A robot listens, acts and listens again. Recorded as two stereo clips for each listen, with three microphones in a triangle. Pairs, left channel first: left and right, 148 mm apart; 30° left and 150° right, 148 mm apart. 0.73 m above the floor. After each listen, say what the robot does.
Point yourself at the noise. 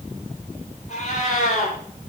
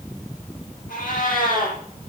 Turn 50° left.
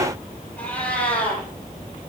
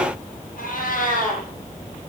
Turn 10° left.
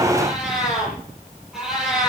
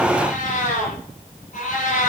Facing the cat meowing.